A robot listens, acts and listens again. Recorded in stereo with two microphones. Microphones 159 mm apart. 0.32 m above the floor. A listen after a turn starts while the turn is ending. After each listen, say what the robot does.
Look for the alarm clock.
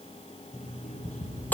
Turn 55° left.
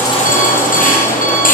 Keep listening.
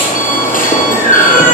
Keep listening.
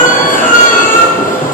I heard an alarm clock, but can't make it out now. It was about straight ahead or 70° left.